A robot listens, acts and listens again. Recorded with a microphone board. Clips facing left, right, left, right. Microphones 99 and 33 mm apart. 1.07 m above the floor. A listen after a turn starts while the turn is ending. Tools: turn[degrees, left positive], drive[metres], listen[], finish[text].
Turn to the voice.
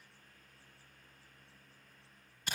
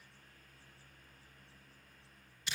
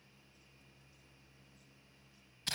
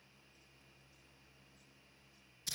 Action: listen[]
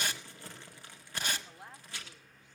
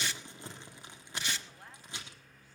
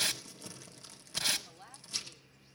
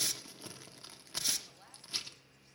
Thought: The woman speaking: about 20° left or 160° left.
Action: turn[20]
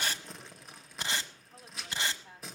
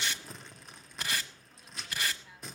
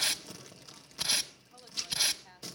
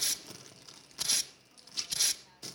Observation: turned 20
Thought: So it is at 135° left.
Action: turn[135]
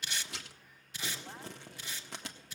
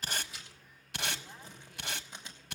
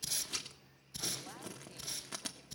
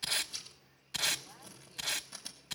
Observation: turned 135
Action: listen[]
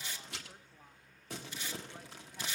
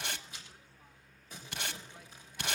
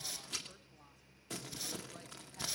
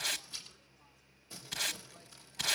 Action: listen[]
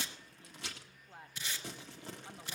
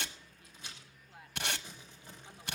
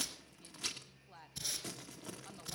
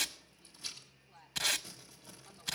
Thought: The woman speaking is now 40° left.
Action: turn[40]
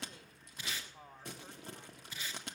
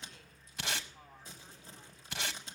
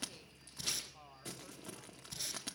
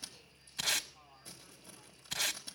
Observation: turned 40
Thought: The woman speaking is now 25° left.
Action: turn[25]
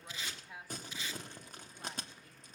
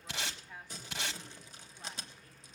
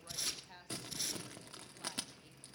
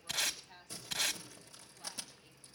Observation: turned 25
Thought: The woman speaking is now 10° left.
Action: turn[10]
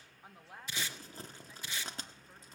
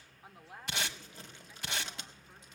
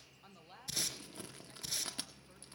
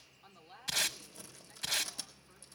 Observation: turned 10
Action: finish[Found it: a woman speaking, straight ahead, 1 to 2 m away.]